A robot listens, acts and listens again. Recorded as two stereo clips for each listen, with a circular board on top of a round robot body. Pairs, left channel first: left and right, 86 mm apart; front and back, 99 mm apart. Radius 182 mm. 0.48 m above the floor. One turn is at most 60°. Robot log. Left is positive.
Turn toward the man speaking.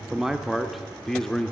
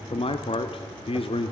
note: The man speaking: 10° left.
cmd yaw +10
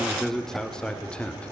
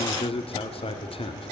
note: The man speaking is now 15° left.
cmd yaw +15
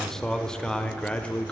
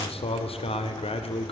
note: The man speaking is now 15° left.
cmd yaw +15
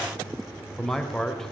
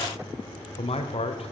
end: Facing the man speaking, 2 to 4 m away.